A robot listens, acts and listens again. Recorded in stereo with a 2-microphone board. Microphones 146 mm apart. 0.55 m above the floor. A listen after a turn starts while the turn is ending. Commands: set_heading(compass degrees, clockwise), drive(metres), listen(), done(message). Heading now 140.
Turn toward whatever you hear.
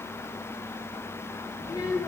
set_heading(115)
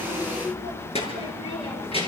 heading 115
set_heading(335)
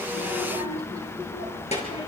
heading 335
set_heading(290)
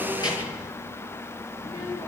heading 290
set_heading(265)
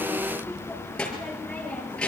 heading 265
done("Found it: a child speaking, straight ahead.")